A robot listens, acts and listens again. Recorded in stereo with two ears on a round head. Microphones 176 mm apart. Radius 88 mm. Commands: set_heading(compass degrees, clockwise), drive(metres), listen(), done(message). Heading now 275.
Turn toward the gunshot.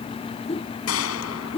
set_heading(185)
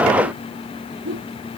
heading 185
done("I heard a gunshot from this way, but can't make it out now.")